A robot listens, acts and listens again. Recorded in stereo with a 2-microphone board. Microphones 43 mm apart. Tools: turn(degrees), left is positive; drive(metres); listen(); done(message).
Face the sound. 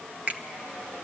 turn(degrees=-40)
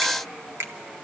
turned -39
turn(degrees=-100)
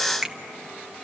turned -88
turn(degrees=-15)
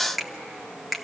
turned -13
done("Found it: a finger snap, straight ahead, 1 to 2 m away.")